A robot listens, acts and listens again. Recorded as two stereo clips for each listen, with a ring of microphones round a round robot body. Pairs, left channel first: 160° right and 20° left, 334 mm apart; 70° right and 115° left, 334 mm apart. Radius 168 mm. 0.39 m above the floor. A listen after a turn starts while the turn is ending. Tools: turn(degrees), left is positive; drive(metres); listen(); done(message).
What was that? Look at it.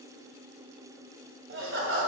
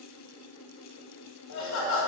turn(degrees=-30)
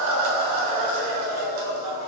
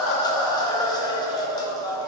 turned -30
turn(degrees=10)
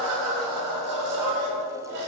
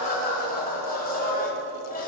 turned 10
done("Facing the laughter.")